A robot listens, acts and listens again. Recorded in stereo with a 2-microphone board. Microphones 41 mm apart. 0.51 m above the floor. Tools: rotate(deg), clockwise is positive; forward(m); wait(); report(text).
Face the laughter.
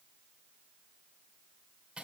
wait()
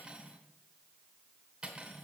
wait()
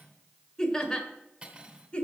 rotate(-25)
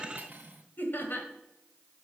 rotate(-125)
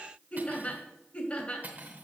rotate(-30)
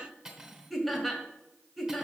report("Found it: laughter, straight ahead, 2 to 4 m away.")